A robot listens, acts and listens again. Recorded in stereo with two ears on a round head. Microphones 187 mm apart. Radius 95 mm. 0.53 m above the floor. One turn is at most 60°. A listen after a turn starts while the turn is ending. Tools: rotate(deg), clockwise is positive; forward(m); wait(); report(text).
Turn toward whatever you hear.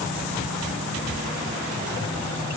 wait()
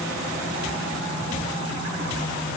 wait()
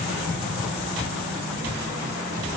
report("I can't make out anything to turn to.")